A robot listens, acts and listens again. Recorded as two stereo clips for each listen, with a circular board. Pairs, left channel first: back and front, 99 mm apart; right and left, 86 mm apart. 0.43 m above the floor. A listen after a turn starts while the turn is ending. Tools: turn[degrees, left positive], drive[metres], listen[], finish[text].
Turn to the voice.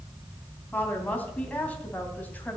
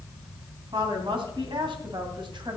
Thought: The woman speaking: 105° left.
Action: turn[105]
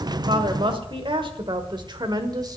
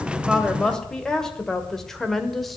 Action: finish[Facing the woman speaking, 1 to 2 m away.]